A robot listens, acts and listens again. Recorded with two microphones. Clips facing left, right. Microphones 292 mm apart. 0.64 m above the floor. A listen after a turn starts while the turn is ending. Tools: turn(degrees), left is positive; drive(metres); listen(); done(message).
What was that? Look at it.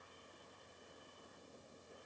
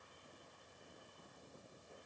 listen()
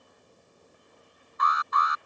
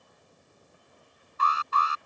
turn(degrees=-35)
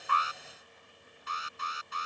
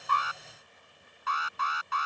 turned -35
turn(degrees=-105)
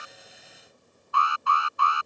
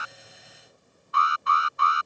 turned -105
turn(degrees=-20)
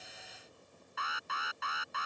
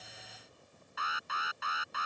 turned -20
done("Facing the alarm.")